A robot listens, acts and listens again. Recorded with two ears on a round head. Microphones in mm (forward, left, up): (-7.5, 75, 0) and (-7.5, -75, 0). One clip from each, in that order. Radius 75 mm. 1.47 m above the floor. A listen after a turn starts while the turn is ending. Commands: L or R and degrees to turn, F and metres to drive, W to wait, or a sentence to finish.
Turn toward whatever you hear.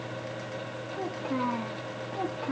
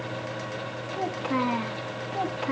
R70
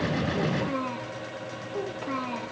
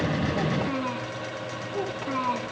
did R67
R15
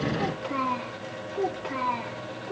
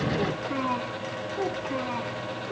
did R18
Facing the child speaking, 2 to 4 m away.